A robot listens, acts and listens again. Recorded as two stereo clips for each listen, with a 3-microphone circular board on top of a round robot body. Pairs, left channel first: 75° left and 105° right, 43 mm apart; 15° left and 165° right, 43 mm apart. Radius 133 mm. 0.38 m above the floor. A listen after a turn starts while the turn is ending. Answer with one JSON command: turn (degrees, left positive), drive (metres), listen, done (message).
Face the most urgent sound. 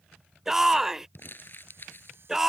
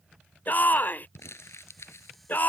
{"turn": -25}
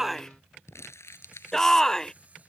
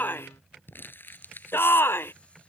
{"done": "Facing the shout."}